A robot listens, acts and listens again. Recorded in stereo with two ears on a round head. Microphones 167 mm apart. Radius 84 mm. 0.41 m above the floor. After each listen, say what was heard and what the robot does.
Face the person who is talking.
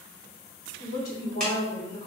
The woman speaking: about 55° left or 125° left. Turn 55° left.
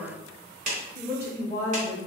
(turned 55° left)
So it is at 20° left. Turn 20° left.
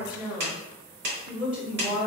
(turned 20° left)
The woman speaking is now 10° right. Turn 10° right.
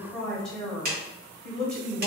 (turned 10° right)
Facing the woman speaking.